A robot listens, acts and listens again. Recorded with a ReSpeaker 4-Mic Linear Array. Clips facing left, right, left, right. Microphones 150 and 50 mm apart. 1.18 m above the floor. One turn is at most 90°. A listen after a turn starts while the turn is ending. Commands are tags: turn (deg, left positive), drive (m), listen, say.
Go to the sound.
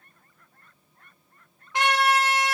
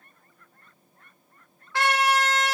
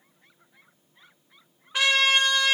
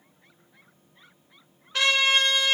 <turn deg="20"/>
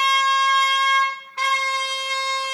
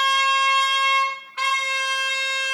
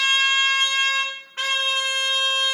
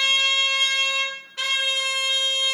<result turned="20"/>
<turn deg="90"/>
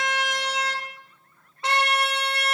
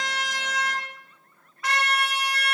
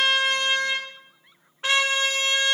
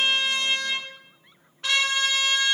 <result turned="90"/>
<turn deg="30"/>
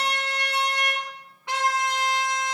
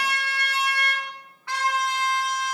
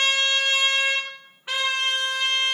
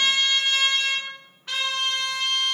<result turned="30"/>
<turn deg="20"/>
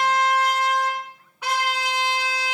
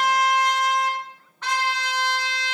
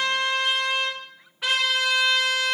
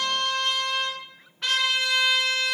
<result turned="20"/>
<turn deg="10"/>
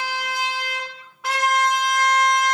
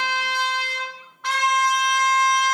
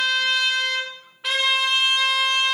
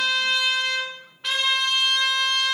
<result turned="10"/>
<drive m="1.0"/>
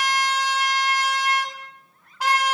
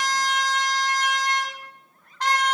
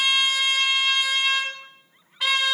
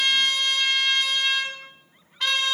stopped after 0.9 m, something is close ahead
<turn deg="10"/>
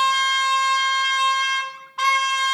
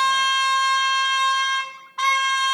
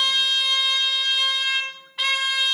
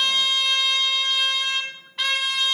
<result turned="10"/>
<say>I am next to the trumpet.</say>